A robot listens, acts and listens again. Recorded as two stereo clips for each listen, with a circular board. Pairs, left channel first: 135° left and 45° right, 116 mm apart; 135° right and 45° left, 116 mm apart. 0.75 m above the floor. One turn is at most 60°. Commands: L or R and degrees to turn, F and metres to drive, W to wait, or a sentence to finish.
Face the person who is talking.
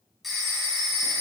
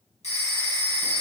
W
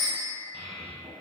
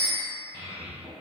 Facing the child speaking.